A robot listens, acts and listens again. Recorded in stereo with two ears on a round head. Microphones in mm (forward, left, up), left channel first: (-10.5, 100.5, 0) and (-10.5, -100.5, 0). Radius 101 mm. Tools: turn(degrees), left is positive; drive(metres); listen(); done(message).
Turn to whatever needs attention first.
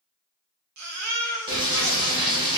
turn(degrees=-90)
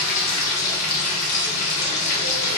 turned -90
listen()
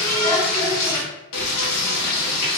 listen()
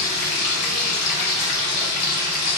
done("I heard a baby crying from this way, but can't make it out now.")